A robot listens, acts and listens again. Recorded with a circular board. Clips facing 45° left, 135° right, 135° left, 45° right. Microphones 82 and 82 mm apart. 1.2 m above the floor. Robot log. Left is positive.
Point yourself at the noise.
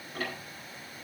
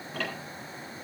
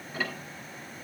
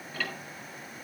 note: The ticking: 150° right.
cmd yaw -150
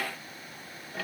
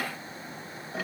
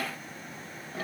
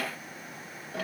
note: The ticking is now 55° right.
cmd yaw -55
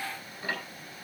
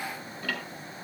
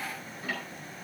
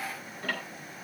note: The ticking is now 20° right.
cmd yaw -20
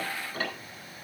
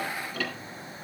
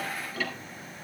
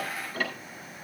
end: Found it: ticking, straight ahead.